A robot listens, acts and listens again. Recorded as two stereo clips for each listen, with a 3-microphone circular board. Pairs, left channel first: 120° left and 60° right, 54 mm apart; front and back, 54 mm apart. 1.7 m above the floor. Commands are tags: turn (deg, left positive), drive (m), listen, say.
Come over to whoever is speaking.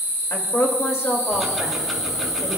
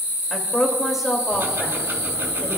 <turn deg="95"/>
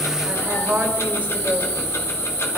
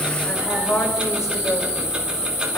<drive m="1.0"/>
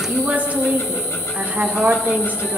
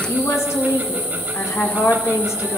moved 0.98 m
<drive m="1.0"/>
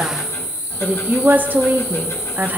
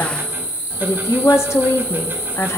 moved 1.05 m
<turn deg="-10"/>
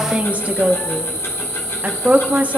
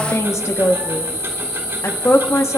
<drive m="1.0"/>
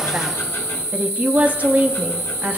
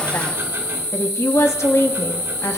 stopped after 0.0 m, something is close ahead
<say>Arrived at the woman speaking, straight ahead.</say>